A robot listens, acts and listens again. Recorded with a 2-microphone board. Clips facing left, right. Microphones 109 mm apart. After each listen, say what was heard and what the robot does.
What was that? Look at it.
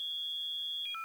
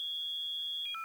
Keep listening.
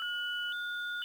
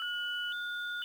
Keep listening.
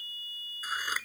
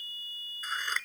Turn 30° left.
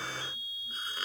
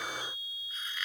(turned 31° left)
So it is at 140° left. Turn 140° left.
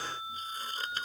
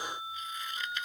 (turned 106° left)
The scissors is now 35° left. Turn 35° left.
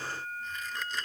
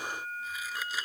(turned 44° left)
The scissors is now 10° right. Turn 10° right.
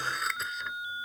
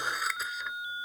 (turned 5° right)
Found it: scissors, straight ahead.